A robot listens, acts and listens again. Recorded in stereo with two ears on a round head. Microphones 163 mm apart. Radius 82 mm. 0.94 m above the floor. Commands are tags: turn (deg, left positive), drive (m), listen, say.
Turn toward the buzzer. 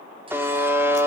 <turn deg="-30"/>
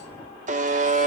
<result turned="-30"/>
<turn deg="-135"/>
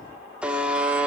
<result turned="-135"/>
<say>Facing the buzzer, 2 to 4 m away.</say>